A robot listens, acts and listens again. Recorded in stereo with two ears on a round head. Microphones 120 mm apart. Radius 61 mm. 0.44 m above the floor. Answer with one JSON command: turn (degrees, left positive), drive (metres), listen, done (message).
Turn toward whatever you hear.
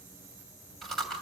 {"turn": 30}
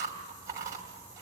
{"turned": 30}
{"turn": -25}
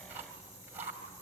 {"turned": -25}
{"turn": -15}
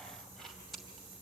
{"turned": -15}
{"done": "Found it: chewing, straight ahead."}